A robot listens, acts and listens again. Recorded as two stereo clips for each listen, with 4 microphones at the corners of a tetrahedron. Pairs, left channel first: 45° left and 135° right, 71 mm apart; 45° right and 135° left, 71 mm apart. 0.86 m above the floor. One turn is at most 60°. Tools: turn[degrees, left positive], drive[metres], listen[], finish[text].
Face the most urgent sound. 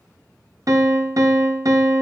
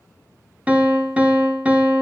Action: listen[]
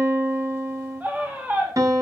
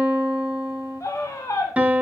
Thought: The scream: 75° right.
Action: turn[-60]
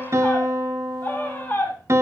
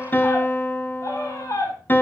Thought: The scream is now 15° right.
Action: turn[-15]
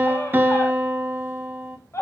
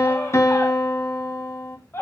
Action: finish[Found it: a scream, straight ahead, 2 to 4 m away.]